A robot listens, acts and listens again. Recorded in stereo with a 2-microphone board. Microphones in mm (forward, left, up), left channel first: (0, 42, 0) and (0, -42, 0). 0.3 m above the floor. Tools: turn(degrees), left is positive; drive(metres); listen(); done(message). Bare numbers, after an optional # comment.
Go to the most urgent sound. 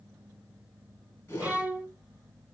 listen()
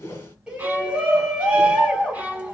turn(-30)
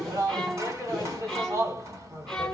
# So it is at 140° right.
turn(-140)
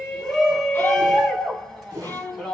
drive(1.0)
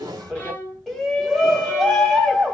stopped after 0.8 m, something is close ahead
done("I am next to the shout.")